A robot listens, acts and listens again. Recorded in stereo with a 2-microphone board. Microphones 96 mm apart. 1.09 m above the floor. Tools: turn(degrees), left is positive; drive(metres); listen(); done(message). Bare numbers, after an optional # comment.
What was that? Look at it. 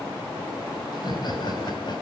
# The laughter: about 50° left or 130° left.
turn(50)
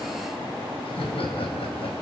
# So it is at 70° left.
turn(70)
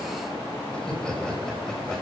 done("Facing the laughter, over 4 m away.")